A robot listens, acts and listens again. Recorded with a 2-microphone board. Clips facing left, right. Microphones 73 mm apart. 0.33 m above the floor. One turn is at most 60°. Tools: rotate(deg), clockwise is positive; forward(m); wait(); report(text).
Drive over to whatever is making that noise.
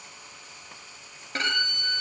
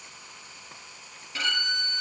rotate(-50)
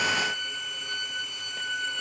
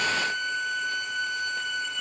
forward(1.0)
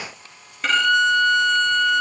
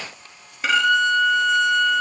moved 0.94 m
forward(1.0)
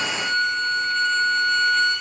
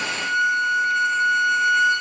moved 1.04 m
rotate(10)
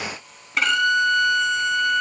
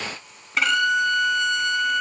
forward(1.0)
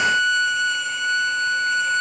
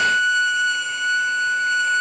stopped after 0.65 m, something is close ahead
report("I am next to the violin.")